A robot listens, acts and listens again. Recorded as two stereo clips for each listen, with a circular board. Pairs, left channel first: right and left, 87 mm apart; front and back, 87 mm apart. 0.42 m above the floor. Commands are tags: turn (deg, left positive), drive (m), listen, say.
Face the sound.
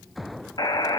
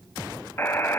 <turn deg="-65"/>
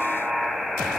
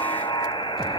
<say>Facing the buzzer, 1 to 2 m away.</say>